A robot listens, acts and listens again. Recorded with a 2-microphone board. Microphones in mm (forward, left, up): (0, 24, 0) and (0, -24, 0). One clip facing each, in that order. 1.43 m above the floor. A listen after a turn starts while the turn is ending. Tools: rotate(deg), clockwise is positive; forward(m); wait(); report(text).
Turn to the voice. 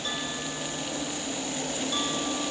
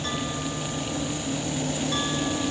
wait()
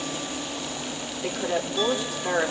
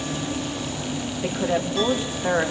rotate(40)
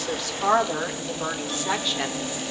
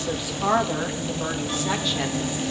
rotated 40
report("Facing the woman speaking, 2 to 4 m away.")